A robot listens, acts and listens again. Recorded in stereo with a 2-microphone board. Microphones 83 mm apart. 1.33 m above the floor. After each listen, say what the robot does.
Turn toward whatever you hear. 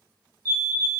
Turn 45° right.
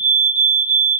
Turn 10° right.
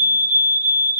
Facing the fire alarm, 1 to 2 m away.